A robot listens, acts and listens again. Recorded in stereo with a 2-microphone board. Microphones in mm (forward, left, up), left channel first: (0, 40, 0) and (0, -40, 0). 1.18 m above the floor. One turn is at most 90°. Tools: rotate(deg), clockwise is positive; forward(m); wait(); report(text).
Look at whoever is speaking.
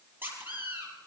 wait()
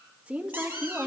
rotate(30)
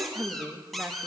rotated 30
rotate(15)
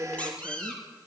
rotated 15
rotate(90)
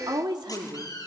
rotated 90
rotate(70)
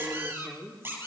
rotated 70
report("Found it: a woman speaking, straight ahead, 2 to 4 m away.")